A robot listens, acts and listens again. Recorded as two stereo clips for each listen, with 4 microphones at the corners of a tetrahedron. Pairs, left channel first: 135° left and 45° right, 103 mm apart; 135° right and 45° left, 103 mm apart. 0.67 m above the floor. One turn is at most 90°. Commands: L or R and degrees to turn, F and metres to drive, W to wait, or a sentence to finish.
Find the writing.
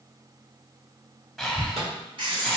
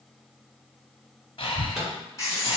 R80
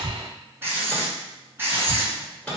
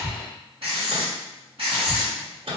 L20
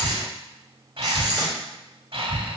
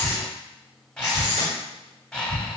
Found it: writing, straight ahead.